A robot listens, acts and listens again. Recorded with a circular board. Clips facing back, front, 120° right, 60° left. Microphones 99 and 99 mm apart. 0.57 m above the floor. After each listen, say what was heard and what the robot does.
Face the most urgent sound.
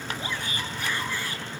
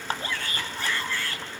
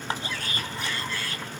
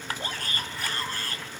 The shout: 105° left. Turn 105° left.
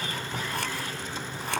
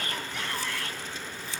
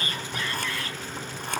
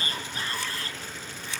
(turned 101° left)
Facing the shout, over 4 m away.